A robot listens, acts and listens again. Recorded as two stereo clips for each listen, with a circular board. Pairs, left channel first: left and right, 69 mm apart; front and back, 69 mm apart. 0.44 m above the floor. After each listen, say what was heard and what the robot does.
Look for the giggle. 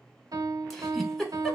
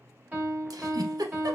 The giggle: straight behind. Turn 180° left.
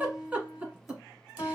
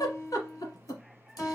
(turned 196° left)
The giggle is now 20° right. Turn 20° right.
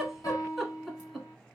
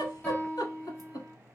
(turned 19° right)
Found it: a giggle, straight ahead.